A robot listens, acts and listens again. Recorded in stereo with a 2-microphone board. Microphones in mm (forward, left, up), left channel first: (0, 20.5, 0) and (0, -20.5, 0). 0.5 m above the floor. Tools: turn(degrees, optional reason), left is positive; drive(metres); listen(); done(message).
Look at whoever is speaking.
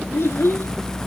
turn(degrees=90)
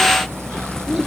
listen()
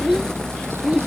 turn(degrees=-10, reason="The child speaking is now 10° right.")
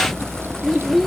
done("Facing the child speaking.")